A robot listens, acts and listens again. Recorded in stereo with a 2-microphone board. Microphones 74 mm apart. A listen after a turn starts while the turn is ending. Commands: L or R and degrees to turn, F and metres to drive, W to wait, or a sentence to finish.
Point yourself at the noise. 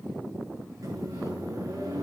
R50
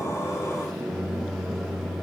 Found it: a microwave, straight ahead.